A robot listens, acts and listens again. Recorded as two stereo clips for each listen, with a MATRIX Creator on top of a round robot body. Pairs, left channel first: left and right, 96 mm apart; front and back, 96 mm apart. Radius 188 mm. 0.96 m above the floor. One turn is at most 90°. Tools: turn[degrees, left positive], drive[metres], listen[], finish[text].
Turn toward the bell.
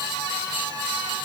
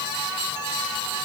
Action: listen[]
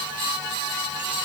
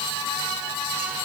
Action: listen[]
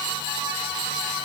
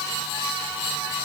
Action: finish[I can't make out a bell to turn to.]